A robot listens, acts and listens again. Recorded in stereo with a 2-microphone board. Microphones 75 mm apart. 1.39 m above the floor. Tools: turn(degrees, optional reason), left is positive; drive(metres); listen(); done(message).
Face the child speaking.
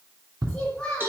turn(degrees=30)
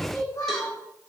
turn(degrees=130, reason="So it is at 130° left.")
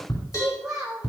turn(degrees=-10, reason="The child speaking is now 10° right.")
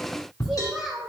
done("Facing the child speaking.")